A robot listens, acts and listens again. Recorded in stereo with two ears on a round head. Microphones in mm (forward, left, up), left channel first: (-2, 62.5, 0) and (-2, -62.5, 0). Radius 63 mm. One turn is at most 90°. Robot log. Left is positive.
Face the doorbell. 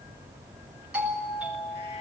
cmd yaw -30
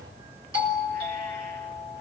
note: So it is at 145° right.
cmd yaw -90
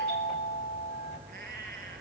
note: The doorbell is now 50° right.
cmd yaw -50
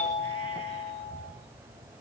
note: The doorbell is now 10° left.
cmd yaw +10
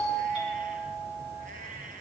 end: Found it: a doorbell, straight ahead.